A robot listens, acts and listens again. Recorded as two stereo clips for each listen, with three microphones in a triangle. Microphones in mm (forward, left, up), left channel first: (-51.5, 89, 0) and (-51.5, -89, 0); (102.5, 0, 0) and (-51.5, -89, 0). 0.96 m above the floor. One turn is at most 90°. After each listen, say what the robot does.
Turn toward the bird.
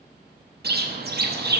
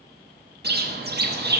Turn 90° right.
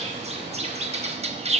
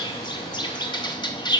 Turn 40° right.
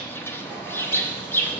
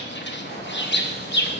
Turn 15° left.
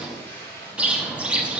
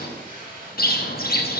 Facing the bird, under 1 m away.